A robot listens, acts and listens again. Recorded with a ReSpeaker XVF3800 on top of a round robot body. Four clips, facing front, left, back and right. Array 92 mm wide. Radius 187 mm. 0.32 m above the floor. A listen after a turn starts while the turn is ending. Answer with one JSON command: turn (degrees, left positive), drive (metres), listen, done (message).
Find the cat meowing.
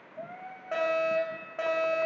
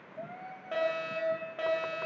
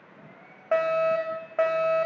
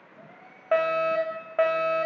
{"turn": 30}
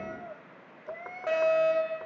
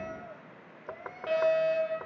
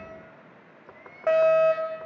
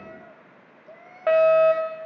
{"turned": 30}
{"done": "Found it: a cat meowing, straight ahead."}